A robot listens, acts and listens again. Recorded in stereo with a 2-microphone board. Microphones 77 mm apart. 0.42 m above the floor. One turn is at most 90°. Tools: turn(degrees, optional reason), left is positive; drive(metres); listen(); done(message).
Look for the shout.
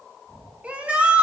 turn(degrees=-20, reason="The shout: about 20° right or 160° right.")
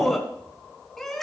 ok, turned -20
done("Found it: a shout, straight ahead.")